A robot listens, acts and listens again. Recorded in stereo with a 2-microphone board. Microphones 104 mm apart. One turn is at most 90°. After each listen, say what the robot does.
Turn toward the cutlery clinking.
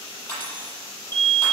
Turn 20° left.
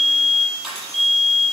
Facing the cutlery clinking, over 4 m away.